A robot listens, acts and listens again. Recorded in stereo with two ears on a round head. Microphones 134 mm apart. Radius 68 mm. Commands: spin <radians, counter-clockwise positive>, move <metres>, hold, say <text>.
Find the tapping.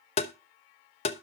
spin 0.70
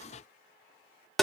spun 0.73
say Facing the tapping.